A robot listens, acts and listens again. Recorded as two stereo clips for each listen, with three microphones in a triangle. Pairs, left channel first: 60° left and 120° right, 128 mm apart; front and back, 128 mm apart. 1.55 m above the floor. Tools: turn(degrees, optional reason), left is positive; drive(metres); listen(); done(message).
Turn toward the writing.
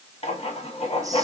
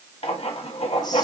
turn(degrees=30, reason="The writing: 30° left.")
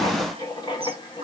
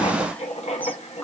turn(degrees=10, reason="The writing is now 10° left.")
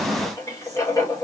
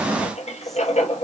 done("Facing the writing.")